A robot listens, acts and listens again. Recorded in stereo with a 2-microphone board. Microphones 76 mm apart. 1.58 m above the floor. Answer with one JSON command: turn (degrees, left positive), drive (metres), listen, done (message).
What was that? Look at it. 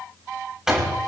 {"turn": -30}
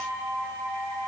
{"listen": true}
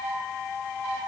{"done": "I heard a door slam, but can't make it out now. It was about 25° left or 145° right."}